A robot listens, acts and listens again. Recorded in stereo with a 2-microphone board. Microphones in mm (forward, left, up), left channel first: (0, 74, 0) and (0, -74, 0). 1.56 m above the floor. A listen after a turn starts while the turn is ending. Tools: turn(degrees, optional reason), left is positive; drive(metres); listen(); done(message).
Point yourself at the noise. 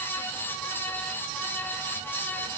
listen()
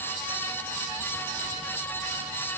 listen()
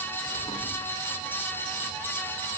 done("I can't make out anything to turn to.")